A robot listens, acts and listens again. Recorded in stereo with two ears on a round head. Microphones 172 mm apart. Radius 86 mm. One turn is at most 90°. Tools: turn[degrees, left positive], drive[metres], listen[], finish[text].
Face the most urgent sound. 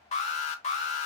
Thought: The alarm: about 35° left or 145° left.
Action: turn[35]
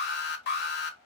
Thought: So it is at 95° left.
Action: turn[90]
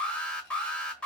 Action: finish[Found it: an alarm, straight ahead, 1 to 2 m away.]